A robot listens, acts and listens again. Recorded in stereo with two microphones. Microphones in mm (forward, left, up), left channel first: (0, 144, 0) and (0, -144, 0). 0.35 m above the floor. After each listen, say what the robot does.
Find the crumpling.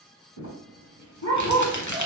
Turn 90° left.
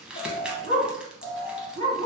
Found it: crumpling, straight ahead.